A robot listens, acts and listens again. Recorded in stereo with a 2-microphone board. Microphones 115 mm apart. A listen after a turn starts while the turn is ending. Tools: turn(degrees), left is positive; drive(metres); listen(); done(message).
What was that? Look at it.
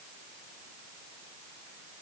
listen()
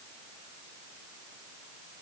listen()
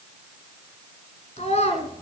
turn(degrees=65)
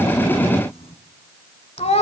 turn(degrees=60)
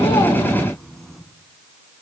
listen()
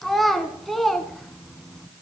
done("Found it: a child speaking, straight ahead, 1 to 2 m away.")